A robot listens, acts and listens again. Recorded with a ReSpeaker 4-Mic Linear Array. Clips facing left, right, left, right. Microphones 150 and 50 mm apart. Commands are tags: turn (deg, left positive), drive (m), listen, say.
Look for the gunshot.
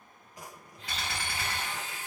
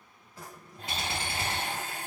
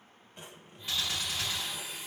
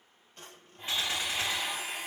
<turn deg="-25"/>
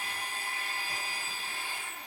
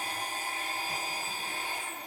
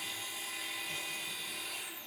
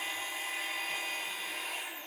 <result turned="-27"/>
<listen/>
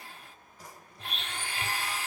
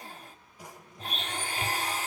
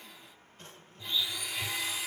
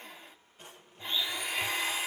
<say>I heard a gunshot, but can't make it out now. It was about straight ahead or 125° right.</say>